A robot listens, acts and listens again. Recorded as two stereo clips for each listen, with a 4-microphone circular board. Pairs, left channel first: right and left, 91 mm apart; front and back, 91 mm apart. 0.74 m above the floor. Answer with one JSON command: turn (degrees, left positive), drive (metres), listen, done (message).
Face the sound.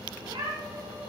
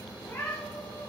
{"turn": 65}
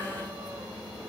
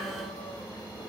{"listen": true}
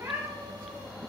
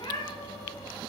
{"turn": 25}
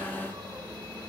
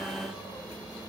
{"listen": true}
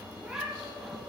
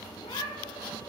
{"turn": 15}
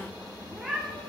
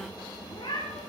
{"done": "Found it: a cat meowing, straight ahead, over 4 m away."}